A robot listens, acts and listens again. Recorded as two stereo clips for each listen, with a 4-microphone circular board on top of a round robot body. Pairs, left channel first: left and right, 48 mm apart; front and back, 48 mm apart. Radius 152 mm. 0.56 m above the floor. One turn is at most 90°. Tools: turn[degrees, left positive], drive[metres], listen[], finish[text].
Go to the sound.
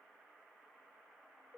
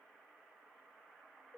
Action: listen[]
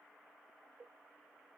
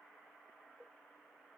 Action: listen[]
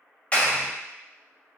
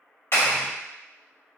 Thought: The clap: 25° left.
Action: turn[25]
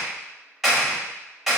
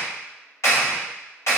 Action: drive[1.0]
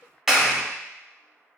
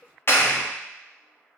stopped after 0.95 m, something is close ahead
Action: finish[Arrived at the clap, straight ahead.]